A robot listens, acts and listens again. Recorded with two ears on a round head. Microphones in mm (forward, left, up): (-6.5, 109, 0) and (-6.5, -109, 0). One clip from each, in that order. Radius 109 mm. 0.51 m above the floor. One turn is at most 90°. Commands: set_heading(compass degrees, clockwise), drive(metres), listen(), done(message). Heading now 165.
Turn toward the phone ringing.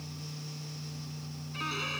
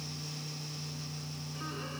listen()
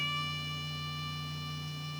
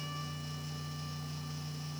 listen()
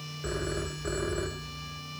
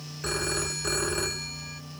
set_heading(255)
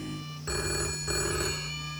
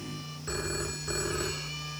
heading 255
set_heading(240)
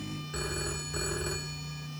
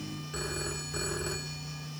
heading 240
done("Facing the phone ringing.")